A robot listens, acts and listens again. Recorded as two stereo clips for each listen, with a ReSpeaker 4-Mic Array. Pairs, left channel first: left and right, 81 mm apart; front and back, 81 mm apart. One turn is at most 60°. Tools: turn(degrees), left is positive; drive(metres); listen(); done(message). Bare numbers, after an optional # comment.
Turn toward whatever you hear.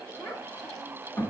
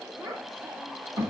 # The child speaking: 155° left.
turn(60)
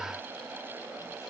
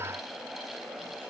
# Nothing new. It was at 95° left.
turn(60)
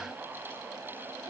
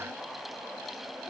# Nothing new. It was at 35° left.
turn(35)
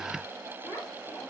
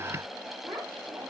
# The child speaking is now 110° left.
turn(60)
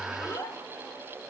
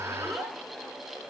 # The child speaking is now 80° left.
turn(60)
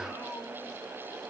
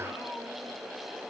# Nothing new. It was at 20° left.
turn(20)
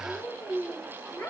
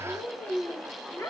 # The child speaking is now 20° left.
turn(20)
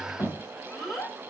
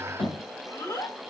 done("Facing the child speaking, 1 to 2 m away.")